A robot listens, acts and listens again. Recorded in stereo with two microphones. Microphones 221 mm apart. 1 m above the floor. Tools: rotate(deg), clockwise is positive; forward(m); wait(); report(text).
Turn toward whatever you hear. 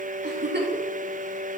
rotate(55)
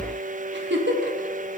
rotate(65)
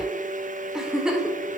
report("Found it: a giggle, straight ahead.")